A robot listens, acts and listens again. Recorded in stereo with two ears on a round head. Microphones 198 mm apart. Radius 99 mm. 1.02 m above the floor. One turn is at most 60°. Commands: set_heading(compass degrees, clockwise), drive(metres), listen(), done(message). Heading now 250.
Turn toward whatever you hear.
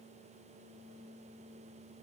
listen()
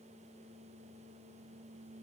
listen()
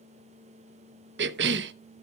set_heading(305)
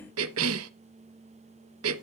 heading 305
set_heading(5)
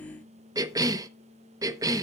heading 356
set_heading(11)
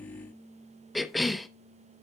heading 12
done("Found it: a cough, straight ahead.")